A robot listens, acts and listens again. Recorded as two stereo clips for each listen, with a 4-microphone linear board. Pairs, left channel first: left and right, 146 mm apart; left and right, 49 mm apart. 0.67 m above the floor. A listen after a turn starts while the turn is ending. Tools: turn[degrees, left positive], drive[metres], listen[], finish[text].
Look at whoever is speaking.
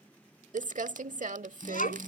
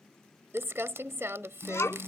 Action: turn[90]
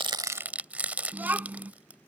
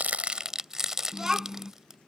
Thought: So it is at 15° right.
Action: turn[-15]
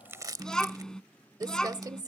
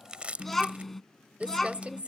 Action: finish[Facing the child speaking.]